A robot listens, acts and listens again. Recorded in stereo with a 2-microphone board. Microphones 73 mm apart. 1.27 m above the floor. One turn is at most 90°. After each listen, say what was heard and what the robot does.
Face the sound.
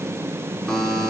Turn 30° left.
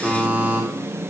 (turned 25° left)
So it is at 15° right. Turn 15° right.
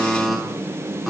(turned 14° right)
Found it: a buzzer, straight ahead, 2 to 4 m away.